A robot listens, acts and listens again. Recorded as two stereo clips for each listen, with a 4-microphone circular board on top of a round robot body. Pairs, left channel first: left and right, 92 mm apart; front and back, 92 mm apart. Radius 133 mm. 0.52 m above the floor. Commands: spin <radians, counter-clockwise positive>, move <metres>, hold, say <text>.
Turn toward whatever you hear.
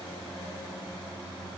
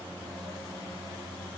hold
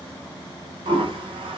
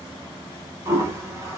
spin -2.01
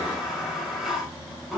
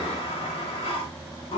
say Found it: a toilet flushing, straight ahead.